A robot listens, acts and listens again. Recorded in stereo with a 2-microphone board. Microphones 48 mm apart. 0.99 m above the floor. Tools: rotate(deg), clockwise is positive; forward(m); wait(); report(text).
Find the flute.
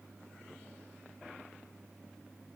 wait()
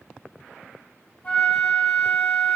rotate(-35)
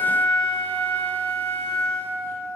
rotate(-105)
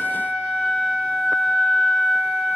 rotate(-30)
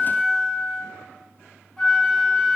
rotate(-10)
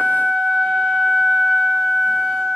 report("Found it: a flute, straight ahead.")